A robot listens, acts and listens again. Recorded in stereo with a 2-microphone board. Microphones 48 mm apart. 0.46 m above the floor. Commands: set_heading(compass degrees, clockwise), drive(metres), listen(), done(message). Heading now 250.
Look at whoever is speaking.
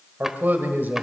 set_heading(290)
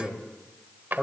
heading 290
set_heading(300)
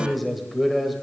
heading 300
done("Found it: a man speaking, straight ahead.")